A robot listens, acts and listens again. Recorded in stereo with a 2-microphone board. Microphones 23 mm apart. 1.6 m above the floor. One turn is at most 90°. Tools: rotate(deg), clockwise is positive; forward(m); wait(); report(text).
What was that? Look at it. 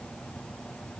wait()
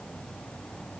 wait()
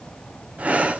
rotate(60)
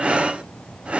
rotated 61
rotate(55)
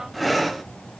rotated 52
report("Facing the breathing.")